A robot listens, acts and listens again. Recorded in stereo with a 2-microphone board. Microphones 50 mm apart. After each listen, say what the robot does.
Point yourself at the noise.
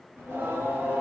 Turn 55° right.
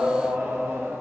Turn 65° right.
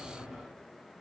Turn 10° right.
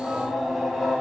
Found it: singing, straight ahead.